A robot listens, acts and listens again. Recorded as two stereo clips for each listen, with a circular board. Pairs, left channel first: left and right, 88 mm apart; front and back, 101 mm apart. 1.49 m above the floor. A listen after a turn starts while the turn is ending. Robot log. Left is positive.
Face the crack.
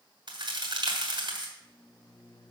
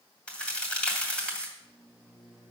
note: The crack: 80° right.
cmd yaw -80
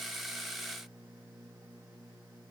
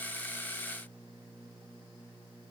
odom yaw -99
note: Nothing new. It was at 20° left.
cmd yaw +20
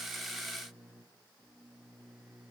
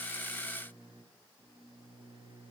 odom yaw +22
end: Facing where the crack came from. I can't hear it now.